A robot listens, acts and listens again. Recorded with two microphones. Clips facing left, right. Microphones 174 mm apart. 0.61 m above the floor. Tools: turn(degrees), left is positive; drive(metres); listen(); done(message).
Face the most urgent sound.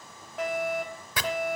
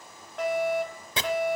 turn(degrees=30)
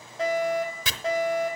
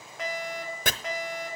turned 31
turn(degrees=145)
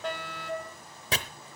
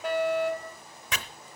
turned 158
turn(degrees=-10)
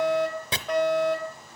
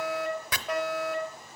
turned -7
done("Found it: a fire alarm, straight ahead.")